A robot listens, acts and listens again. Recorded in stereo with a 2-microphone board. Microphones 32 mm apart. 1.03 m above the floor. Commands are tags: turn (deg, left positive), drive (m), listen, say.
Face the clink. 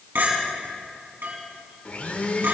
<turn deg="-90"/>
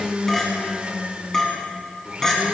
<turn deg="15"/>
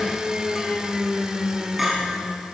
<say>Facing the clink.</say>